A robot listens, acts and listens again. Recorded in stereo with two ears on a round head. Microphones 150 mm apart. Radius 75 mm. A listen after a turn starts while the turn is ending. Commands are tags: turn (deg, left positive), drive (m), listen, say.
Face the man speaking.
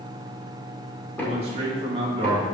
<turn deg="-30"/>
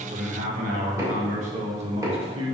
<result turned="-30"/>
<turn deg="-35"/>
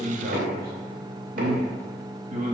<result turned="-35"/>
<turn deg="-135"/>
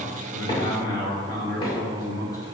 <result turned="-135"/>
<turn deg="20"/>
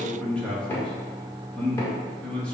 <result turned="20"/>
<say>Found it: a man speaking, straight ahead.</say>